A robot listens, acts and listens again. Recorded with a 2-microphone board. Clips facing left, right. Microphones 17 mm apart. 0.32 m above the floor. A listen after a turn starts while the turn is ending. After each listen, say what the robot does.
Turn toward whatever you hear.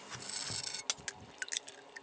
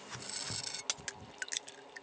Keep listening.
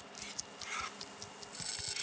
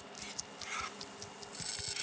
Keep listening.
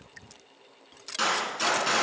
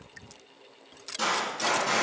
Turn 65° left.
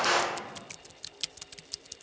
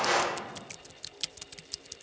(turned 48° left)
Keep listening.
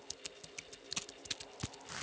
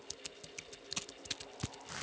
I heard a gunshot, but can't make it out now. It was about 20° left or 65° left.